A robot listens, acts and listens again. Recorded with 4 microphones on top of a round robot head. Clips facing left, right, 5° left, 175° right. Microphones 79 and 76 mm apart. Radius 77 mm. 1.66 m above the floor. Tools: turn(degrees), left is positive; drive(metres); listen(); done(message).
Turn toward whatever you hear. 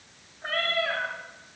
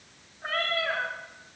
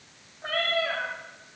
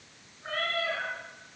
done("Facing the cat meowing, 2 to 4 m away.")